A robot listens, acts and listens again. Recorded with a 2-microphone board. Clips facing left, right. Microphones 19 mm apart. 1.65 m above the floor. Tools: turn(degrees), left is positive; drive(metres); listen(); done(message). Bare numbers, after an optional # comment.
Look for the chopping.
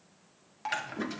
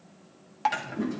turn(30)
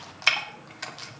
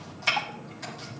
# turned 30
# So it is at 135° left.
turn(135)
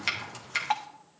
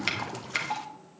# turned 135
done("Facing the chopping, 1 to 2 m away.")